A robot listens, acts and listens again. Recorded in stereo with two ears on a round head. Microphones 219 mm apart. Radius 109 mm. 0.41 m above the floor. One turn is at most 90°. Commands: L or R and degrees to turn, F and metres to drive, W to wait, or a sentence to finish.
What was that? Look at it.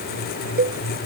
R40
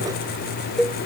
Facing the cowbell.